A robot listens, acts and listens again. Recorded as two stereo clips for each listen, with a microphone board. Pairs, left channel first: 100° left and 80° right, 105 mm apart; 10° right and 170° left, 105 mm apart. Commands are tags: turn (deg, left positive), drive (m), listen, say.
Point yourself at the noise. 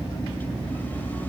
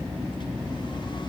<listen/>
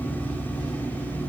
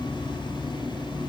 <listen/>
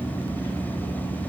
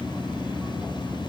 <say>I can't make out anything.</say>